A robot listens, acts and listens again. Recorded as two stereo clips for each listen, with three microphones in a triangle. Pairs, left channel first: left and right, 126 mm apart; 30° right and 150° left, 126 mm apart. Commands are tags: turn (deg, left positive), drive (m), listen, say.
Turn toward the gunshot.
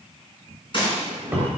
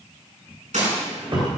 <turn deg="135"/>
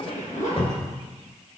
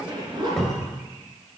<say>Facing where the gunshot came from. I can't hear it now.</say>